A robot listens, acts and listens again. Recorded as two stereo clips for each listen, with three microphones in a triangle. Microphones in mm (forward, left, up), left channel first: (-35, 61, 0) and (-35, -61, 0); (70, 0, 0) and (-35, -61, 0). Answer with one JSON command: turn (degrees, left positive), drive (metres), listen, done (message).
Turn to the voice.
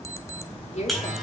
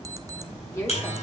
{"turn": 95}
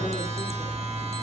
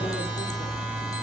{"listen": true}
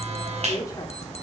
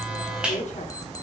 {"turn": 30}
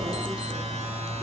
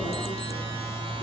{"listen": true}
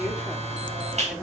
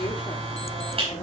{"listen": true}
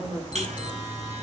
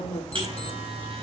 {"turn": -15}
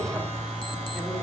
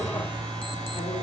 {"listen": true}
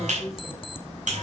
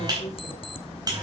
{"listen": true}
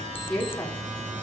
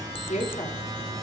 {"done": "Facing the woman speaking, 2 to 4 m away."}